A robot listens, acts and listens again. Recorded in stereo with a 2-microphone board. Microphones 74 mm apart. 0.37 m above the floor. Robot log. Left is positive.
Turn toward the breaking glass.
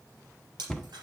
cmd yaw -90
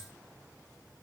end: Facing where the breaking glass came from. I can't hear it now.